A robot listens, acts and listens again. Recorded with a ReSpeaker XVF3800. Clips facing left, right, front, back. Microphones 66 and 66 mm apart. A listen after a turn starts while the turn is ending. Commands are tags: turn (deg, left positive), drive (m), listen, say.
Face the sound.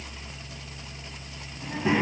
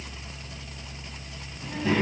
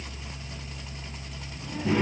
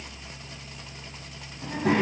<turn deg="160"/>
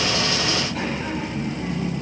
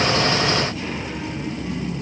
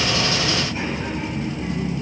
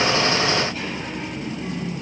<turn deg="75"/>
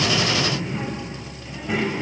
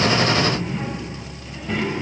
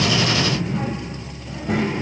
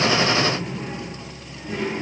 <say>Facing the child speaking, 2 to 4 m away.</say>